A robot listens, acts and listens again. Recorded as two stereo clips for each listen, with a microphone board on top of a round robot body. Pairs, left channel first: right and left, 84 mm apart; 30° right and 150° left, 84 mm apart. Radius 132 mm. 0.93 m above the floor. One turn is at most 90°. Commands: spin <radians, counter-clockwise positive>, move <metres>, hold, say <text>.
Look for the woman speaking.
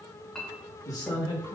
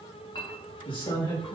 spin -0.96
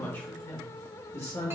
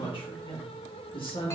spin -0.61
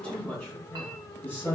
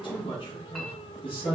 spin -0.44
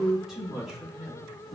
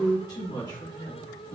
say Facing the woman speaking.